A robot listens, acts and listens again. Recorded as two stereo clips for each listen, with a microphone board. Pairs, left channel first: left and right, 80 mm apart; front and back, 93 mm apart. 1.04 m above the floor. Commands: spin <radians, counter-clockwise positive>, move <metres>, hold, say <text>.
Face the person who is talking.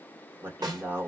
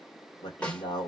spin -0.52
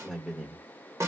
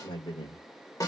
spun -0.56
say Found it: a man speaking, straight ahead.